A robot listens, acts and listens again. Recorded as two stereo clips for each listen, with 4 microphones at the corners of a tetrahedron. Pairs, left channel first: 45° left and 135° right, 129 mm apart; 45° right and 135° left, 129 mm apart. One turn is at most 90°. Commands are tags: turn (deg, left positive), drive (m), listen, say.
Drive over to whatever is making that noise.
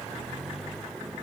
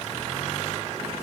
<listen/>
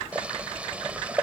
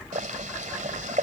<turn deg="90"/>
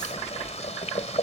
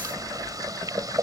<turn deg="75"/>
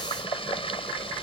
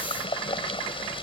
<drive m="1.0"/>
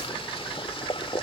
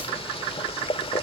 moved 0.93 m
<drive m="1.0"/>
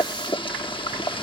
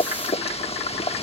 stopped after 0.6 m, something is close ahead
<say>I am next to the boiling.</say>